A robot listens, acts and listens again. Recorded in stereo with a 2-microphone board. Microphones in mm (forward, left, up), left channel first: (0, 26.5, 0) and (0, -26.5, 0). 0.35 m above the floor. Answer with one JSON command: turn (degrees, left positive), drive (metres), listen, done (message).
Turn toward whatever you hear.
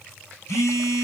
{"turn": 75}
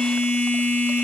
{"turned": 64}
{"turn": 40}
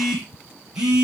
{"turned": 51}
{"turn": -10}
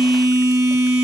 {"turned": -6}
{"done": "Found it: a phone buzzing, straight ahead, 2 to 4 m away."}